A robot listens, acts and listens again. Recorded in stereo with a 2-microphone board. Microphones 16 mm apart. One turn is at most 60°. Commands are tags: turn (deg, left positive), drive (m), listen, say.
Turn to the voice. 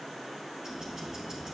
<listen/>
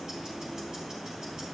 <listen/>
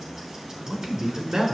<turn deg="-60"/>
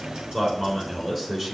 <turn deg="-30"/>
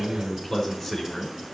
<say>Facing the man speaking.</say>